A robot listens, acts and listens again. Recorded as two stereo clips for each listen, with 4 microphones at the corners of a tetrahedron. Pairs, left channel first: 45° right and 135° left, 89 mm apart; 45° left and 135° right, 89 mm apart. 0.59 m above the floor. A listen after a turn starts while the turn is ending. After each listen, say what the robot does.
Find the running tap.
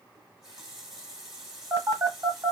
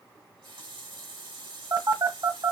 Turn 140° right.
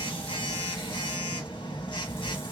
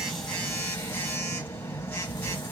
Keep listening.
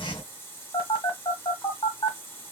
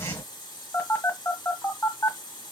Turn 15° left.
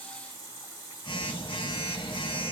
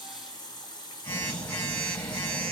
Facing the running tap, 1 to 2 m away.